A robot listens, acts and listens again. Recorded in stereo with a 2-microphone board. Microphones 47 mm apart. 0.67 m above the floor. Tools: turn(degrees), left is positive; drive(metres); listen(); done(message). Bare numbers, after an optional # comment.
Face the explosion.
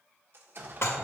# The explosion: about 50° right or 130° right.
turn(-50)
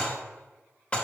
listen()
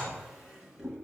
done("I heard an explosion, but can't make it out now. It was about straight ahead or 80° right.")